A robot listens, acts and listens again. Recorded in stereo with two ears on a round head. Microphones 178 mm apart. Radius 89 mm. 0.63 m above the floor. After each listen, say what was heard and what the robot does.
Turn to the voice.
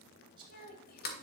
The child speaking: about 45° left or 135° left. Turn 45° left.
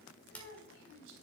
So it is at 65° left. Turn 65° left.
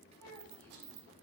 Keep listening.
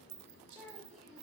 Found it: a child speaking, straight ahead, 2 to 4 m away.